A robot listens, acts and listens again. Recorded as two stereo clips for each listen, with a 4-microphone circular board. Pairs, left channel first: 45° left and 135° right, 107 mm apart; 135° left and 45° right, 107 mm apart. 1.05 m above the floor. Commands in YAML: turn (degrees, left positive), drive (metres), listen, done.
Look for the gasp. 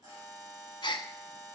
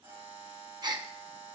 done: "Found it: a gasp, straight ahead, under 1 m away."